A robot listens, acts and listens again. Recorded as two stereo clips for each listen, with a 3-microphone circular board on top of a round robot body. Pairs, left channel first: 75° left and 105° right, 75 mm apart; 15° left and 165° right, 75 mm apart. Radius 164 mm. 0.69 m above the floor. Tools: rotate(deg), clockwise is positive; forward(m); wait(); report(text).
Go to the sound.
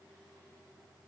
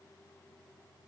wait()
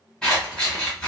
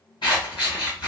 forward(1.0)
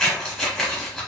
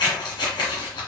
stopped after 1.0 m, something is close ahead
rotate(10)
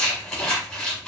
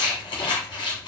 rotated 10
report("I am next to the scissors.")